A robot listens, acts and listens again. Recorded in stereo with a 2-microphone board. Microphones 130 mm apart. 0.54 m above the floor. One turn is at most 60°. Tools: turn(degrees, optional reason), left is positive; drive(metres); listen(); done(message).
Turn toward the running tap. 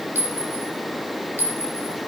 listen()
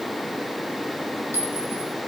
listen()
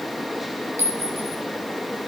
done("I can't make out a running tap to turn to.")